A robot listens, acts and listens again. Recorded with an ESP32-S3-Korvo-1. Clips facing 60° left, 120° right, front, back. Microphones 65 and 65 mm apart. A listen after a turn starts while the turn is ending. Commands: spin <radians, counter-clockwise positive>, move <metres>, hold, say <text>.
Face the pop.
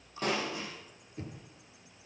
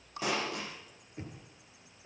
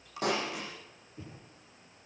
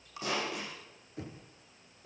spin -0.61
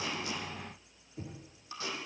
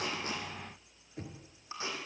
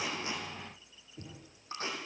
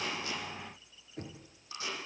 say I heard a pop from this way, but can't make it out now.